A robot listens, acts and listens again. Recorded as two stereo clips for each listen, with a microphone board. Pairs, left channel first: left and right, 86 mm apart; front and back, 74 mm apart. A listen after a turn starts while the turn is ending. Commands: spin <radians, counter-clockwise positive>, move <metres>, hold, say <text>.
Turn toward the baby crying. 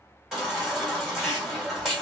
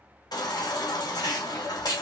say Facing the baby crying, 2 to 4 m away.